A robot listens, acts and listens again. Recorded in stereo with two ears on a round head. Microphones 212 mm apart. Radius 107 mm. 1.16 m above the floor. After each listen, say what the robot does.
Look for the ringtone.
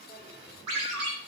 Turn 70° right.
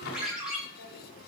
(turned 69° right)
Facing the ringtone.